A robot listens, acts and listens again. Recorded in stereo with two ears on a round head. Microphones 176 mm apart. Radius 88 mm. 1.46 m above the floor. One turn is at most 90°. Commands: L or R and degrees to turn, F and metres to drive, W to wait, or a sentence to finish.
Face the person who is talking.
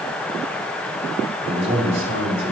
R30
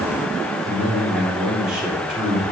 Facing the man speaking.